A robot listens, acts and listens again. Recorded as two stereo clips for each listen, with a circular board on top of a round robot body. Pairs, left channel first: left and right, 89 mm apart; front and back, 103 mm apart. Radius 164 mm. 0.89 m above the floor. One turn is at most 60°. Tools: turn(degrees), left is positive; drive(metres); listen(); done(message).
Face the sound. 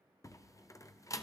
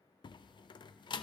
turn(degrees=40)
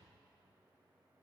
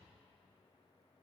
done("I heard a door slam from this way, but can't make it out now.")